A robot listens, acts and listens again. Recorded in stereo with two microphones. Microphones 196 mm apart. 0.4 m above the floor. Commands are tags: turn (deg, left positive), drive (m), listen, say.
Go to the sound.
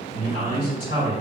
<turn deg="-40"/>
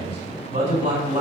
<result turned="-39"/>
<turn deg="-90"/>
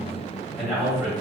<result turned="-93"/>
<drive m="1.0"/>
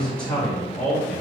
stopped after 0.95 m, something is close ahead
<turn deg="10"/>
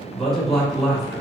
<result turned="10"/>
<say>Arrived at the man speaking, straight ahead.</say>